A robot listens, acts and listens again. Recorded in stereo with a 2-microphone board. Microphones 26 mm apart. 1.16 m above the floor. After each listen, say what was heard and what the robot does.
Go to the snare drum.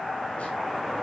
Keep listening.
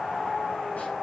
Keep listening.
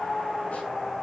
I can't make out a snare drum to turn to.